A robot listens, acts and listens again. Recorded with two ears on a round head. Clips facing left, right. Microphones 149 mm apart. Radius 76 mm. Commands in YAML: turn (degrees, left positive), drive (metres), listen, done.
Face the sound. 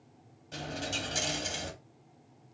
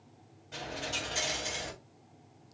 turn: 40
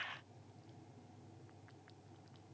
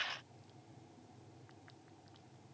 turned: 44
listen: true
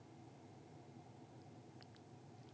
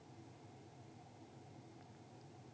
done: "I heard a dropped coin, but can't make it out now. It was about 5° right or 95° left."